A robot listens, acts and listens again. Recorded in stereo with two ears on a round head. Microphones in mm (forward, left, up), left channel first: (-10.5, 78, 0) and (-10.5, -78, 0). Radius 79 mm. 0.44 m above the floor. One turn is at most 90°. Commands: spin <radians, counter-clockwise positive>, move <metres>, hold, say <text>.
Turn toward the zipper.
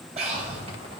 spin -0.61
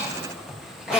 say Facing the zipper, 1 to 2 m away.